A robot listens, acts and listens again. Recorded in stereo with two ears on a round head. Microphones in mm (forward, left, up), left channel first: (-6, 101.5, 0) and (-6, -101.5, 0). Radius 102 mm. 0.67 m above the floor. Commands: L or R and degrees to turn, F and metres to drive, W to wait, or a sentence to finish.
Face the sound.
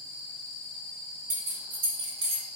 R90
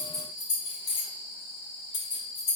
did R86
L40
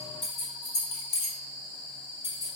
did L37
L15
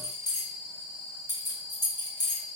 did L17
Found it: keys jangling, straight ahead.